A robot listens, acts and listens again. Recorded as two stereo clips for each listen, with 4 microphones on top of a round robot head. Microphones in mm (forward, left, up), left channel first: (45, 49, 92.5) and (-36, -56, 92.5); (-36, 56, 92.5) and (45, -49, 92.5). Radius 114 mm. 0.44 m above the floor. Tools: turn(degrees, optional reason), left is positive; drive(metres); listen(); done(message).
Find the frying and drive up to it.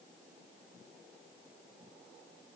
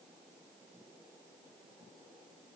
listen()
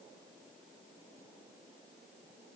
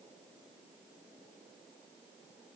listen()
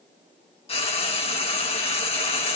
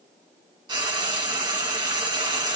drive(metres=1.0)
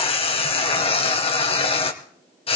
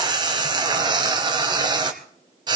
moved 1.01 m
drive(metres=1.0)
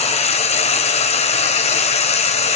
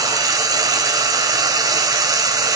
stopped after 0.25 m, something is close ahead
turn(degrees=10, reason="The frying is now 10° left.")
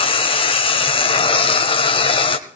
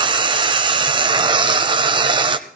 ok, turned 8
done("I am next to the frying.")